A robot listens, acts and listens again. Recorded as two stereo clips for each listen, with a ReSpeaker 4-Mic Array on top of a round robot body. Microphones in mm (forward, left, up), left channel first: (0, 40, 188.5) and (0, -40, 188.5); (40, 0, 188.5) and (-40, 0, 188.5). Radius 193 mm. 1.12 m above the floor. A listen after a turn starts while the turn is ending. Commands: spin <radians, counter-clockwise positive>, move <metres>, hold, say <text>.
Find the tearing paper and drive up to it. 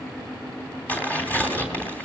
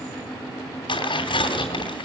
spin 0.35
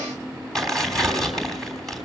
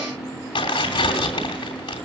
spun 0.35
move 1.0
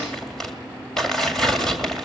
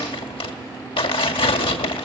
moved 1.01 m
move 1.0
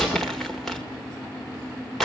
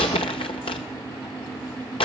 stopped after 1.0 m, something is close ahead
say I am next to the tearing paper.